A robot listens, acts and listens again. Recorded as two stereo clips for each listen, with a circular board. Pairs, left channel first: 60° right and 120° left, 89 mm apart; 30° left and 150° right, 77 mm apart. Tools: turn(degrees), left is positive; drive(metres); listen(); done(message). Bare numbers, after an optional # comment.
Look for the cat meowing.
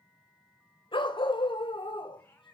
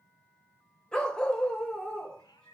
done("Found it: a cat meowing, straight ahead.")